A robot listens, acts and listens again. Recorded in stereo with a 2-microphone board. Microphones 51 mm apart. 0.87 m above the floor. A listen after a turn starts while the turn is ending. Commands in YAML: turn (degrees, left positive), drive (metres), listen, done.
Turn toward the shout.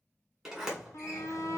turn: 60
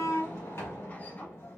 listen: true
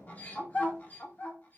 turn: 35
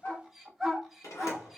done: "Found it: a shout, straight ahead."